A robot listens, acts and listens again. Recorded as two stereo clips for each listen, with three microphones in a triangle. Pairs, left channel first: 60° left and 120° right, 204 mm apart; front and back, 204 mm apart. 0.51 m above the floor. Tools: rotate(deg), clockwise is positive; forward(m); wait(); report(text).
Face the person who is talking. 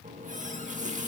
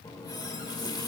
wait()
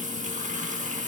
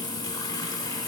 wait()
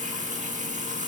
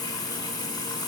report("I can't make out anyone speaking to turn to.")